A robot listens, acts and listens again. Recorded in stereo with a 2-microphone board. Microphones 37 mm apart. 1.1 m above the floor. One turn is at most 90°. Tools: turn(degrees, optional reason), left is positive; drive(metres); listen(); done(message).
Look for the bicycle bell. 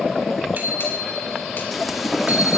turn(degrees=-55, reason="The bicycle bell: about 55° right or 125° right.")
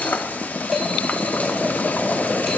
listen()
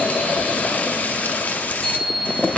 done("Found it: a bicycle bell, straight ahead, over 4 m away.")